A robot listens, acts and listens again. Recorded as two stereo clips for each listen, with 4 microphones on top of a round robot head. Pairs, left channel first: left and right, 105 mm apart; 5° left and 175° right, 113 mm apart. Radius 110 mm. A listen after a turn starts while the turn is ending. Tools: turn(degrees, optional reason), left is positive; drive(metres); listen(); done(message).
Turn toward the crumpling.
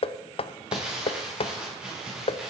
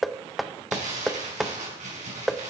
turn(degrees=-170, reason="The crumpling: 170° right.")
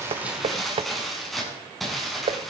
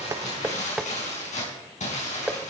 done("Facing the crumpling, over 4 m away.")